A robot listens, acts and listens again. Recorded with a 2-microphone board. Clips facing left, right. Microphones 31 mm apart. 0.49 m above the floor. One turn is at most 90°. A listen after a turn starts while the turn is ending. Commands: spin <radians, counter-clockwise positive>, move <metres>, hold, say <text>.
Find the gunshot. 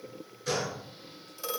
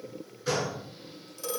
spin -0.26
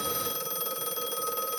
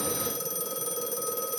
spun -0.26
hold
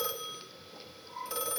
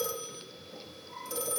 say I heard a gunshot, but can't make it out now. It was about straight ahead or 150° right.